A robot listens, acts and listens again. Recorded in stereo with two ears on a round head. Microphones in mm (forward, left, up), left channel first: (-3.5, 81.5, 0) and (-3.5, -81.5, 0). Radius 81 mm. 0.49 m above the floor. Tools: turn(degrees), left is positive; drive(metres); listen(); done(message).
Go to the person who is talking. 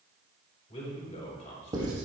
turn(degrees=40)
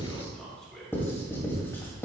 drive(metres=1.0)
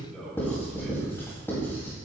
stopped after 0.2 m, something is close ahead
done("Blocked. The man speaking is further on, straight ahead.")